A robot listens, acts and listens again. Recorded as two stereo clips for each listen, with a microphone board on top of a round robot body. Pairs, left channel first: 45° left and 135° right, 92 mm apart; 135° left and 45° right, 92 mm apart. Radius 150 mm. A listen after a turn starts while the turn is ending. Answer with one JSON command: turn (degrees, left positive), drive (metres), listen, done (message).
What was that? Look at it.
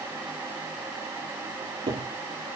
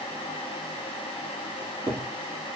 {"turn": -110}
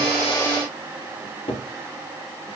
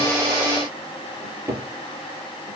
{"turn": 15}
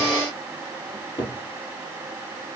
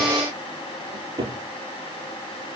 {"done": "Found it: a cupboard door, straight ahead."}